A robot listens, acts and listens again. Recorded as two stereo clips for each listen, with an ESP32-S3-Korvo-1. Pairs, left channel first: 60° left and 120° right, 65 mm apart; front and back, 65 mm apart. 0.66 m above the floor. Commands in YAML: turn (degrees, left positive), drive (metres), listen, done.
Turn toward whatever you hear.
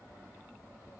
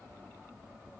listen: true
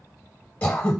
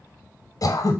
done: "Found it: throat clearing, straight ahead."